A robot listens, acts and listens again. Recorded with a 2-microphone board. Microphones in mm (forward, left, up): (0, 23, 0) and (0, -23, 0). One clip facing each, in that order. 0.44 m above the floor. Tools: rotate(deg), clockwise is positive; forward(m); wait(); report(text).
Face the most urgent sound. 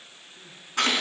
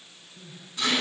rotate(-30)
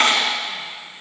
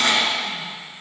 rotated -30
wait()
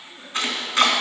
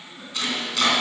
rotate(20)
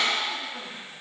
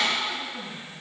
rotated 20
report("Facing the crying, 2 to 4 m away.")